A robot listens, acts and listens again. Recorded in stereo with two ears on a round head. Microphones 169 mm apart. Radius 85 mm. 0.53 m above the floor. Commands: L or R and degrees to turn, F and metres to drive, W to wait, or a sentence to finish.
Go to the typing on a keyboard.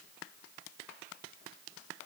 W
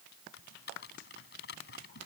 L60
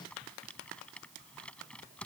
F1.0
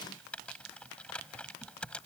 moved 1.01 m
F1.0
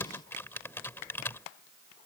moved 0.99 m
L15
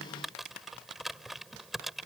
F1.0
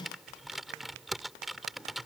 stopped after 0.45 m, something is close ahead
I am next to the typing on a keyboard.